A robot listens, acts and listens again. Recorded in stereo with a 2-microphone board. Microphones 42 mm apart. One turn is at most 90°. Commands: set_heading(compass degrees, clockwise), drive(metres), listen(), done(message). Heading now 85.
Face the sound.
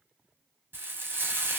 set_heading(145)
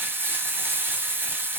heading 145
set_heading(205)
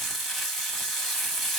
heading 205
done("Found it: frying, straight ahead, 1 to 2 m away.")